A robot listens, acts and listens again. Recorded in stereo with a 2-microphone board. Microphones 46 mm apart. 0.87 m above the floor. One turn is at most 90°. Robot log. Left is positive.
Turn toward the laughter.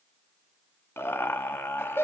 note: The laughter: about 65° left or 115° left.
cmd yaw +65
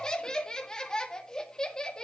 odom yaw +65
note: So it is at 20° left.
cmd yaw +20
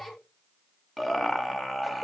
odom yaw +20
end: Found it: laughter, straight ahead.